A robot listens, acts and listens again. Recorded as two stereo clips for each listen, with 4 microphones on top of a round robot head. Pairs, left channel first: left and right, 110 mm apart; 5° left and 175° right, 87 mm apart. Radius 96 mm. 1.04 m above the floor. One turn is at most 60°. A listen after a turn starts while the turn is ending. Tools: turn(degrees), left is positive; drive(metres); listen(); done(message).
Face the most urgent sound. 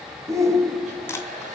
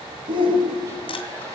turn(degrees=-60)
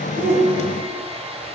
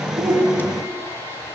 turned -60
turn(degrees=-60)
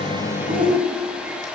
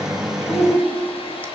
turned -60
turn(degrees=-50)
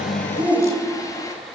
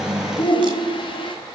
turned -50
turn(degrees=-15)
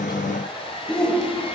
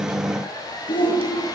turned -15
turn(degrees=10)
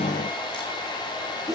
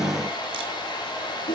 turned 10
done("Facing the shout, 2 to 4 m away.")